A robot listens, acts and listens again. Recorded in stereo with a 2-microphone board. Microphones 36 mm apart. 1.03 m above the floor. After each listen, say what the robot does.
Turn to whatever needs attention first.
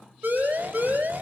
Turn 65° right.
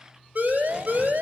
Turn 50° right.
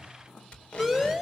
Found it: a siren, straight ahead, over 4 m away.